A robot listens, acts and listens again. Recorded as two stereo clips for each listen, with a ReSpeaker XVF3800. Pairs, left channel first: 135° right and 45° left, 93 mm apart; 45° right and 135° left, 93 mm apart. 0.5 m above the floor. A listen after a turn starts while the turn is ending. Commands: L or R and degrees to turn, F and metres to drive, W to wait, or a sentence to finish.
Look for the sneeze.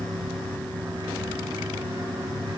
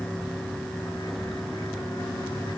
W
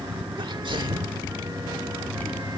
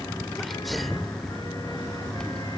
L45
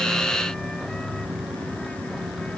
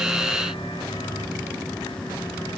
I heard a sneeze from this way, but can't make it out now.